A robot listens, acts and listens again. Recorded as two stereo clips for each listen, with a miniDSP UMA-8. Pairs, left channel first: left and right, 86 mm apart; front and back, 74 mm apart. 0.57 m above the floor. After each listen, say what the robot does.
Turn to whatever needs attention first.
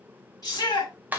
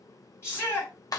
Turn 50° left.
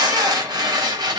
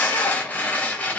Keep listening.
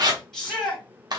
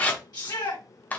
Facing the shout.